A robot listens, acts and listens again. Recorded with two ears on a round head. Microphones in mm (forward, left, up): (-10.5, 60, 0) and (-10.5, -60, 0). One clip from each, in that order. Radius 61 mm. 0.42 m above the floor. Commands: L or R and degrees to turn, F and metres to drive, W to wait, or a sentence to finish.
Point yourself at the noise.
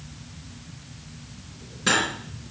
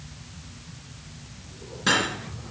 L30
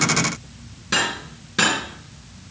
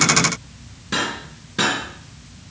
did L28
L150
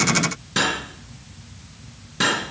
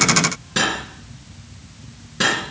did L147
Facing the cutlery clinking.